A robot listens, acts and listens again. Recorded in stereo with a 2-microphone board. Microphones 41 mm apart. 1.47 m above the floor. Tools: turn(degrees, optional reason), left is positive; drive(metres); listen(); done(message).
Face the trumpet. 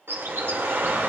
listen()
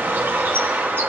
listen()
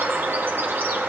done("I can't make out a trumpet to turn to.")